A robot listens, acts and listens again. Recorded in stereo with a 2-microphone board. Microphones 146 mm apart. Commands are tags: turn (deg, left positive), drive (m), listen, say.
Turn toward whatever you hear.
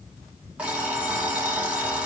<turn deg="-30"/>
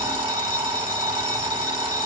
<turn deg="-140"/>
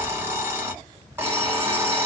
<turn deg="-20"/>
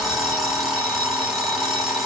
<say>Facing the alarm clock.</say>